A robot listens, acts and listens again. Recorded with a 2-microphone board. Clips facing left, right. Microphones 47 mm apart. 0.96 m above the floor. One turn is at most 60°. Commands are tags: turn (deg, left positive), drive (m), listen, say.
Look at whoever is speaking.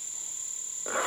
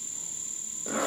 <listen/>
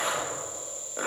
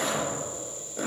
<listen/>
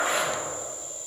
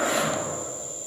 <say>I can't make out anyone speaking, only a zipper.</say>